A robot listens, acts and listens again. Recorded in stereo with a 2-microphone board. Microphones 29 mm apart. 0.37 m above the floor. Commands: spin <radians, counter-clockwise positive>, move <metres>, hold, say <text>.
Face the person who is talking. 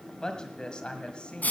spin 0.70
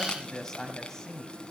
spin 0.35
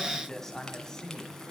spin 0.35
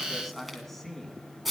say Facing the woman speaking.